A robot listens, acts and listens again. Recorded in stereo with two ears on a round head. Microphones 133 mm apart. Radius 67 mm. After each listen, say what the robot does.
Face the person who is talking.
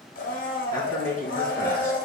Turn 20° left.
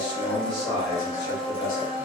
Turn 30° left.
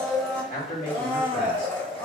Turn 125° left.
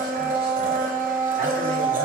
Keep listening.
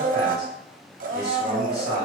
Found it: a man speaking, straight ahead.